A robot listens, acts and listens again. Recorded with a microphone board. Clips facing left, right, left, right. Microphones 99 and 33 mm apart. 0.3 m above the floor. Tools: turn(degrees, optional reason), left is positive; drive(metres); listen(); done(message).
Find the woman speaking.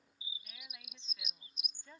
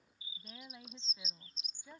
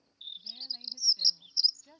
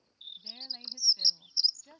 turn(degrees=-30)
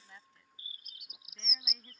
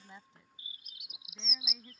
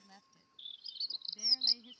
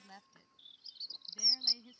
turn(degrees=-30)
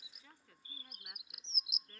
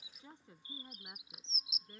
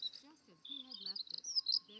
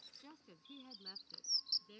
turn(degrees=-30)
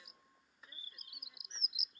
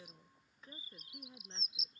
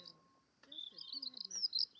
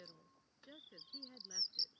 turn(degrees=-145, reason="So it is at 145° right.")
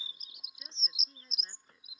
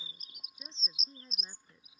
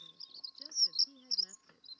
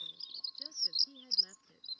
turn(degrees=-15, reason="The woman speaking is now 15° right.")
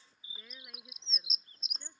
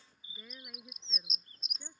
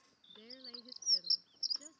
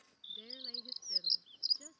done("Facing the woman speaking.")